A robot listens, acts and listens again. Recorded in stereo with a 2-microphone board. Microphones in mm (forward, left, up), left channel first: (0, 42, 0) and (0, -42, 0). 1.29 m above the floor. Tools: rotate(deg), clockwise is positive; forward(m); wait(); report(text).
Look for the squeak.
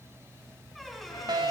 rotate(-30)
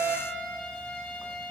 wait()
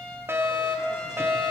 wait()
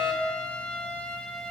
report("I heard a squeak, but can't make it out now. It was about 30° right or 150° left.")